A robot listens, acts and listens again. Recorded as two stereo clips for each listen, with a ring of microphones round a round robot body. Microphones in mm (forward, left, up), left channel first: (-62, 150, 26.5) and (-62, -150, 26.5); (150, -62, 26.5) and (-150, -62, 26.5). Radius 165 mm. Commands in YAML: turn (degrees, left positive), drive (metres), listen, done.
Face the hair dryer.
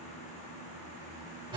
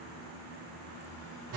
listen: true
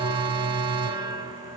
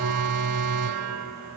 listen: true
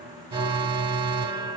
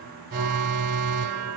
done: "I can't make out a hair dryer, only an alarm."